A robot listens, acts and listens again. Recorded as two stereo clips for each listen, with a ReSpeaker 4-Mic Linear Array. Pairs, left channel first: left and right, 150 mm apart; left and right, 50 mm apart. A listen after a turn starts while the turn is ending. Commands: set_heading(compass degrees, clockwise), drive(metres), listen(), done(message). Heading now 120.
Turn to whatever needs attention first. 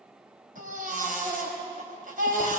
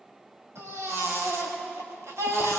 set_heading(190)
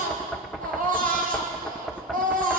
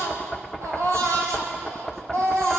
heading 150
set_heading(230)
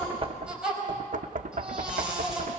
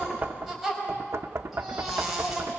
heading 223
done("Facing the baby crying, over 4 m away.")